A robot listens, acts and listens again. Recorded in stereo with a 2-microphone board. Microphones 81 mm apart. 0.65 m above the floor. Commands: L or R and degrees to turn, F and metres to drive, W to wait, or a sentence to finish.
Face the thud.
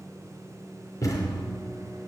L40
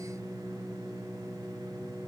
W
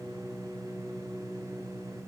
I heard a thud, but can't make it out now. It was about straight ahead or 100° left.